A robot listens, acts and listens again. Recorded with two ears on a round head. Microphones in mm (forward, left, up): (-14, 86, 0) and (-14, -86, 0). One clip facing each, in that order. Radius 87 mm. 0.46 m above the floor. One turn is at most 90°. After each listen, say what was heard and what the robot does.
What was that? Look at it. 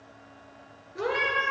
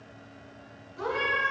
The cat meowing: about 70° left or 110° left. Turn 70° left.
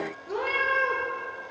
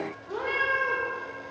So it is at 40° left. Turn 40° left.
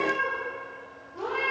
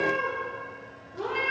The cat meowing is now 10° right. Turn 10° right.
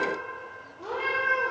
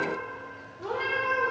Found it: a cat meowing, straight ahead, over 4 m away.